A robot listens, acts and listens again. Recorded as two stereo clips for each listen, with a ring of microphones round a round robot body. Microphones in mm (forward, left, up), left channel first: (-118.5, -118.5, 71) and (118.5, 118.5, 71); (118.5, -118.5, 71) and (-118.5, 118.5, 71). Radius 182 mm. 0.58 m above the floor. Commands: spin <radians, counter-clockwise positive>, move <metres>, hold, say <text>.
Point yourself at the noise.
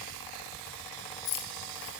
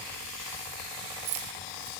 spin 3.14
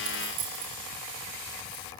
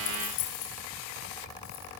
say Found it: keys jangling, straight ahead, over 4 m away.